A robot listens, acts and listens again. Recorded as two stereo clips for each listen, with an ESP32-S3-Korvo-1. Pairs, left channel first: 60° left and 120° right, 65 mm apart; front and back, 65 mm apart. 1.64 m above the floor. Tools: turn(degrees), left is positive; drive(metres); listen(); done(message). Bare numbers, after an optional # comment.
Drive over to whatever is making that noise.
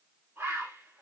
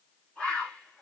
# The bird: 75° right.
turn(-75)
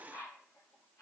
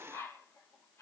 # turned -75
# The bird is now 25° left.
turn(25)
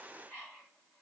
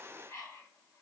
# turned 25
drive(1.0)
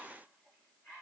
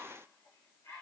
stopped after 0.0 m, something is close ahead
done("Blocked. The bird is further on, straight ahead.")